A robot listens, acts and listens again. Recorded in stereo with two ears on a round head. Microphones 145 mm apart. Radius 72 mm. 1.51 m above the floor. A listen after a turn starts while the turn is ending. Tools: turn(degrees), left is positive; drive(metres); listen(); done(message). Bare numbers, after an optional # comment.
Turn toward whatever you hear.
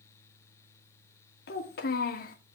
# The child speaking: about 60° left or 120° left.
turn(60)
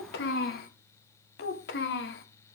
# So it is at 70° left.
turn(70)
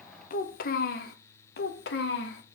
# The child speaking is now 75° left.
turn(75)
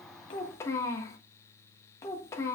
# The child speaking is now 15° left.
turn(15)
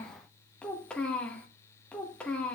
done("Found it: a child speaking, straight ahead.")